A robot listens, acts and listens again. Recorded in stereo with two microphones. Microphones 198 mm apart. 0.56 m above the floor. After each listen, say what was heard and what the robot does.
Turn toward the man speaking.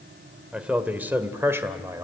The man speaking: about 15° right or 165° right. Turn 15° right.
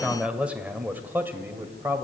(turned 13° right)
Turn 30° right.
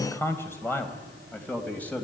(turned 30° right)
Found it: a man speaking, straight ahead.